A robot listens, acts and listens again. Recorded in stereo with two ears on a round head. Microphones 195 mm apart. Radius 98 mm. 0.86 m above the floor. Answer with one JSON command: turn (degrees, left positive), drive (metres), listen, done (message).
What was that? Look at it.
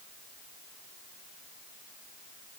{"listen": true}
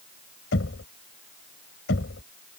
{"turn": 55}
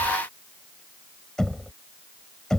{"done": "Found it: knocking, straight ahead."}